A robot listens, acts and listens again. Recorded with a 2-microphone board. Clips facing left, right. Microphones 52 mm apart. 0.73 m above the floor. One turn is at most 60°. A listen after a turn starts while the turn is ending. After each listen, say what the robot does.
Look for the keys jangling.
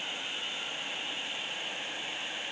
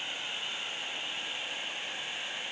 Keep listening.
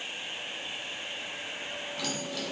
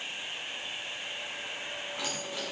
Turn 15° right.
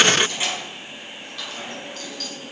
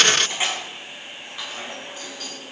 Turn 15° right.
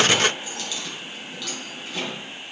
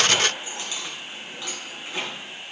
Turn 30° right.
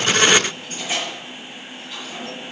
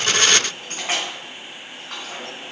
Turn 60° right.
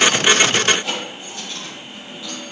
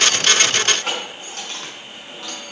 Turn 60° right.
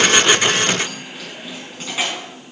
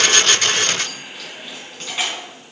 Found it: keys jangling, straight ahead.